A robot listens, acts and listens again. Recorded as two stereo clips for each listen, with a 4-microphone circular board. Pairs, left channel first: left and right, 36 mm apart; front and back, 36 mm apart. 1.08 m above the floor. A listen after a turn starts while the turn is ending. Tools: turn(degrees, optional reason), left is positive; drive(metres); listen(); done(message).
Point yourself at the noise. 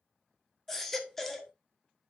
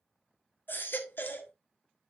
done("Facing the baby crying, 1 to 2 m away.")